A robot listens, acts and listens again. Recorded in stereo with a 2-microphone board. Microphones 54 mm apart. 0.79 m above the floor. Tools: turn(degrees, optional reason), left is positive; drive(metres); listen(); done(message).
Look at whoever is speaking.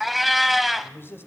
turn(degrees=45, reason="The man speaking: about 45° left or 135° left.")
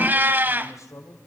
turn(degrees=80, reason="So it is at 80° left.")
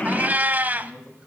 turn(degrees=-20, reason="The man speaking is now 20° right.")
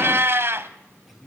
done("Facing the man speaking, over 4 m away.")